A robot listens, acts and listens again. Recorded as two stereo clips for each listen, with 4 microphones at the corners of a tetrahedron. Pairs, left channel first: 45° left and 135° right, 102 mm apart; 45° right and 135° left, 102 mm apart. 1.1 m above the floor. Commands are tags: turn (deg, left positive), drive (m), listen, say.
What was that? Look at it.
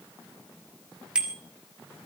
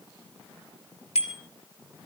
<turn deg="-55"/>
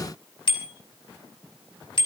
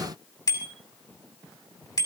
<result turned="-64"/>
<turn deg="10"/>
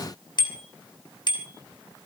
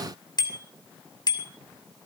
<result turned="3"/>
<say>Found it: a bicycle bell, straight ahead, 2 to 4 m away.</say>